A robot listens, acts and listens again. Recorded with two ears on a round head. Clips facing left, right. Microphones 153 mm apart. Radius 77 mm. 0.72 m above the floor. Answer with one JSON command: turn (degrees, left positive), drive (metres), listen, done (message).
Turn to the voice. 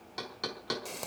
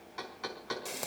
{"listen": true}
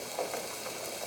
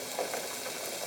{"listen": true}
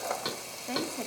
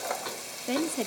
{"turn": -45}
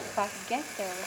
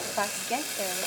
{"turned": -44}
{"done": "Found it: a woman speaking, straight ahead."}